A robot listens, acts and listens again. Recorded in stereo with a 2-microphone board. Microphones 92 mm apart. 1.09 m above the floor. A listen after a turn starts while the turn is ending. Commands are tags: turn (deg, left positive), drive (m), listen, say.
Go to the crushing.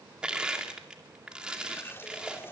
<turn deg="-30"/>
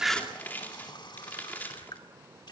<turn deg="20"/>
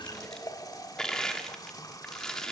<drive m="1.0"/>
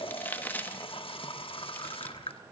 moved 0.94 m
<turn deg="20"/>
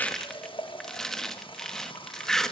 <drive m="1.0"/>
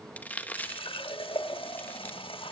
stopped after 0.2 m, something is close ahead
<turn deg="20"/>
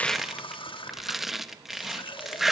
<say>I am next to the crushing.</say>